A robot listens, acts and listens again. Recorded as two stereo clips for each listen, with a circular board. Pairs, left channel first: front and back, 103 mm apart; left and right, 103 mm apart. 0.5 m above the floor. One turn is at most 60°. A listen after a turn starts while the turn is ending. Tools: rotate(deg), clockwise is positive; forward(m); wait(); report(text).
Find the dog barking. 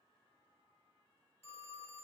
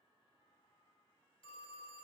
wait()
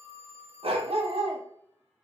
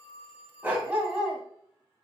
rotate(60)
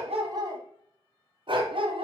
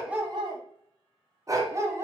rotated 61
rotate(60)
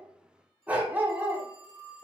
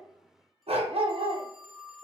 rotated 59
rotate(60)
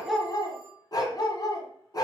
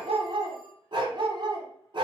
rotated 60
rotate(50)
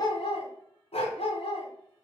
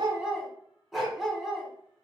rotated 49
report("Facing the dog barking.")